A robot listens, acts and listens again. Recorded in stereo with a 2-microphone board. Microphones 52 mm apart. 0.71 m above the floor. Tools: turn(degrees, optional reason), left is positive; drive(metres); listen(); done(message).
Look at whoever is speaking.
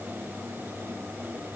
listen()
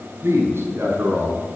turn(degrees=-50, reason="The man speaking: about 50° right or 130° right.")
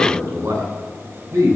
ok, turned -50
turn(degrees=-85, reason="So it is at 85° right.")
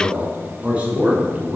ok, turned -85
turn(degrees=-25, reason="The man speaking is now 25° right.")
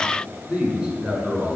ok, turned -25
turn(degrees=-15, reason="The man speaking is now 15° right.")
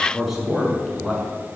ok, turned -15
done("Found it: a man speaking, straight ahead.")